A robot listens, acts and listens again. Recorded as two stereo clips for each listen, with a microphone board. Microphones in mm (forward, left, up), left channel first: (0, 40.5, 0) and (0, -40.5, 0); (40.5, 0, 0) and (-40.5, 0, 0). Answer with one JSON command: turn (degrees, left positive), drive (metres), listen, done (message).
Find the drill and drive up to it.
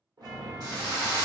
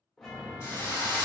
{"turn": -50}
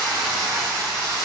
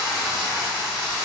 {"drive": 1.0}
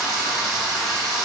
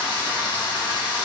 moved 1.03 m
{"drive": 1.0}
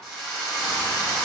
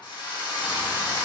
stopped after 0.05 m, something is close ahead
{"turn": 10}
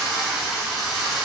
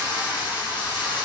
{"done": "Arrived at the drill, straight ahead."}